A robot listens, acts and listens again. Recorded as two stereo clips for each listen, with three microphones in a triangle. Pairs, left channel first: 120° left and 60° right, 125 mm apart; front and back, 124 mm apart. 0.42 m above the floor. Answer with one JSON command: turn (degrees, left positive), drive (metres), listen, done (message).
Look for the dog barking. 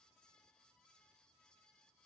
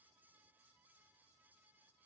{"listen": true}
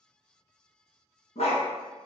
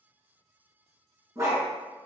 {"turn": 120}
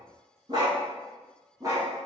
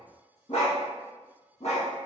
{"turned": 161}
{"done": "Found it: a dog barking, straight ahead."}